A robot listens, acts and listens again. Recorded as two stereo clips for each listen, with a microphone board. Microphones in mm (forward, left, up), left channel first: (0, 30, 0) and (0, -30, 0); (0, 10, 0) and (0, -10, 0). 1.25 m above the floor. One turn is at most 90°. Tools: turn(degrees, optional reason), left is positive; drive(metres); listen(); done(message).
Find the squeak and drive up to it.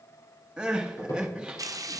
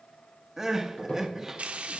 turn(degrees=70, reason="The squeak: about 70° left or 110° left.")
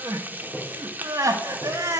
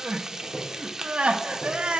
turn(degrees=25, reason="So it is at 25° left.")
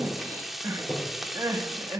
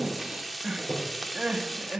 drive(metres=1.0)
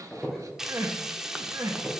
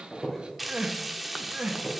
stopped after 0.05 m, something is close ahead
done("Something is in my way. I am facing the squeak but have not reached it.")